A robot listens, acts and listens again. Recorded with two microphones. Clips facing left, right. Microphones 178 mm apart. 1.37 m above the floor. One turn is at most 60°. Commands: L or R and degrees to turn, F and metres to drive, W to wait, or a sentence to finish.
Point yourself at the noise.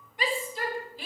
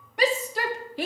R60
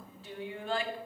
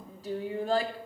R40
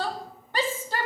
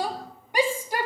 R15
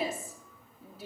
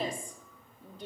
Found it: a shout, straight ahead, 2 to 4 m away.